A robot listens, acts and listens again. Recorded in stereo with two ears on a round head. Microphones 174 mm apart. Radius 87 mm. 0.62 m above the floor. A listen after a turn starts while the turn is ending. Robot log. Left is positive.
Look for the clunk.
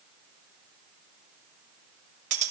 cmd idle
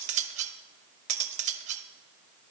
cmd idle
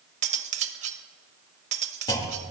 note: The clunk: about 20° left or 160° left.
cmd yaw +20
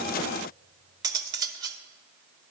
cmd idle
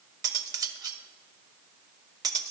end: I heard a clunk, but can't make it out now. It was about straight ahead or 140° left.